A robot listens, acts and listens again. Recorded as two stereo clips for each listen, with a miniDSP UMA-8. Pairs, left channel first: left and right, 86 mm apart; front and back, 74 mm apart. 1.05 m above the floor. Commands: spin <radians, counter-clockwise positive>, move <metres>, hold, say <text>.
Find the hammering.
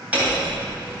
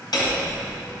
spin -0.26
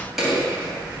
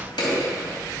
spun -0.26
say Found it: hammering, straight ahead, 2 to 4 m away.